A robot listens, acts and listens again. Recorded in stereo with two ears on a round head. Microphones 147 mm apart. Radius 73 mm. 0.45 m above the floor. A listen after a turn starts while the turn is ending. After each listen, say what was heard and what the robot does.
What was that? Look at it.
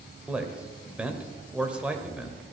Turn 30° right.
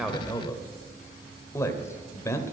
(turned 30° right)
So it is at 20° left. Turn 20° left.
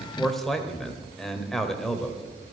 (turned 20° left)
Found it: a man speaking, straight ahead, 1 to 2 m away.